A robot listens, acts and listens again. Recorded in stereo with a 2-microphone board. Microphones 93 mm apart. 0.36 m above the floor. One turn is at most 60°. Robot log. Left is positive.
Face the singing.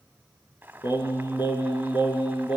note: The singing: about 65° left or 115° left.
cmd yaw +60
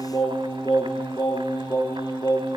note: So it is at 50° left.
cmd yaw +50
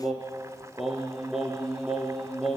end: Found it: singing, straight ahead.